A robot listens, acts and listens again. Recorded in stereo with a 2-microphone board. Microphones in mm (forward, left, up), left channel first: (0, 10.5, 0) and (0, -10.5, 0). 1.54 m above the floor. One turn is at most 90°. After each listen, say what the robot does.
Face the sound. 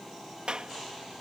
Turn 55° right.
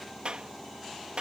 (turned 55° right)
Turn 65° right.
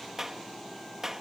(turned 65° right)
Turn 25° right.
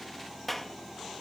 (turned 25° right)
Turn 10° left.
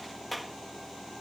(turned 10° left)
Found it: a clap, straight ahead.